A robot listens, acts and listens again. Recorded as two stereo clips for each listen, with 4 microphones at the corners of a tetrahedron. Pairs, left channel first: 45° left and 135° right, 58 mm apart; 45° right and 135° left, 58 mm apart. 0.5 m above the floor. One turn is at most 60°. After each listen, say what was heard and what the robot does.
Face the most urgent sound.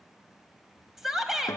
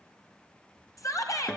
The shout: 50° right. Turn 50° right.
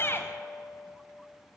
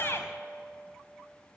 Facing the shout.